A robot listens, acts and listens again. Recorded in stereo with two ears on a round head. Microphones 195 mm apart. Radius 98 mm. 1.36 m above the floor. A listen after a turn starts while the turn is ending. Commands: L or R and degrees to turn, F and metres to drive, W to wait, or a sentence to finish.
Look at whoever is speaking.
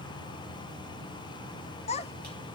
L30
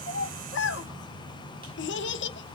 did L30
L120
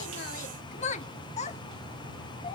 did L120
L35
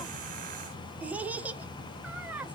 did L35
Facing the child speaking.